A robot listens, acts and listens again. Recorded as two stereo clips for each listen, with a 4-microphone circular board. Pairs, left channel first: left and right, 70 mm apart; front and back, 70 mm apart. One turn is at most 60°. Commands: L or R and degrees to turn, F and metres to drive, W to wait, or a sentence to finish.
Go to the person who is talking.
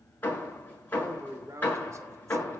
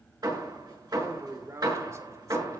R60
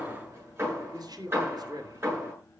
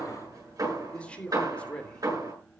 R60
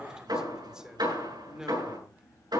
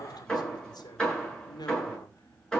R10
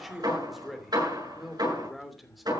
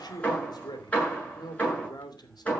F1.0
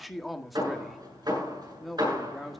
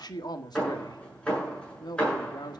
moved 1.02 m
F1.0
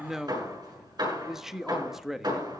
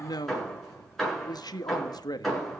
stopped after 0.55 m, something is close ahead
I am next to the man speaking.